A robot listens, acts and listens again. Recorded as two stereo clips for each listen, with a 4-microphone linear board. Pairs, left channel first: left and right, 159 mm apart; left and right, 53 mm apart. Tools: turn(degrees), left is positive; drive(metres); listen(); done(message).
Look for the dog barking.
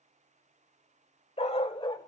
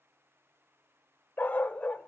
turn(degrees=30)
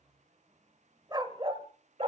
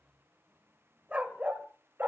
turn(degrees=-40)
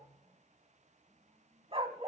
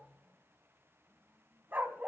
turn(degrees=-40)
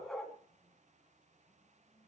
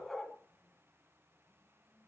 done("Facing the dog barking, 2 to 4 m away.")